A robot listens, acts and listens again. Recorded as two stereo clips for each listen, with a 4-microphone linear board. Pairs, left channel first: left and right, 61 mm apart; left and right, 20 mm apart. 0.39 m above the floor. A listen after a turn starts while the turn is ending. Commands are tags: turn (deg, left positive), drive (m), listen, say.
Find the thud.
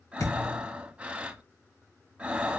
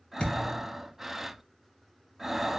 <turn deg="70"/>
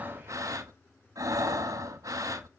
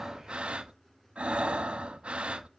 <listen/>
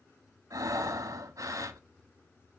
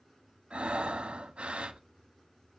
<say>I heard a thud, but can't make it out now. It was about straight ahead or 40° left.</say>